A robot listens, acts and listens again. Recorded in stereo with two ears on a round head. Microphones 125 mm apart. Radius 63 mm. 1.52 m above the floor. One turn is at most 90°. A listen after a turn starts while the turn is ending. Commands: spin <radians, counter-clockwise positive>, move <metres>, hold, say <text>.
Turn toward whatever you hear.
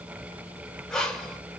spin 0.52
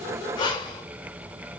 spin 1.57
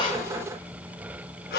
spin 1.57
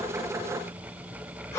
spin 0.35
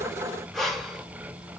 say Found it: breathing, straight ahead, under 1 m away.